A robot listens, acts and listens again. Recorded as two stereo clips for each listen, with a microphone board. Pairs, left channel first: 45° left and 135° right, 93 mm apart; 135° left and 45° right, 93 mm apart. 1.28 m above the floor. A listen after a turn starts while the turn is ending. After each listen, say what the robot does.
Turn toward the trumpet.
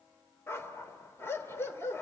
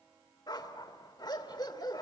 Keep listening.
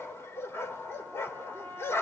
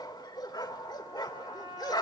Turn 25° right.
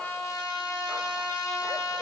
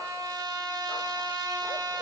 Found it: a trumpet, straight ahead.